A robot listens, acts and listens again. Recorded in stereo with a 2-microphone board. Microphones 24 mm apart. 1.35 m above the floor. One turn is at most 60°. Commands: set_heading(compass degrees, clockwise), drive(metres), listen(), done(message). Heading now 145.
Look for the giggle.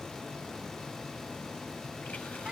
listen()
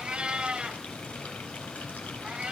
listen()
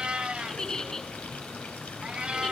set_heading(120)
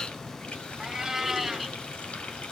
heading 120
listen()
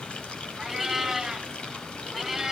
listen()
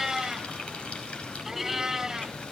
done("I heard a giggle, but can't make it out now. It was about straight ahead or 130° left.")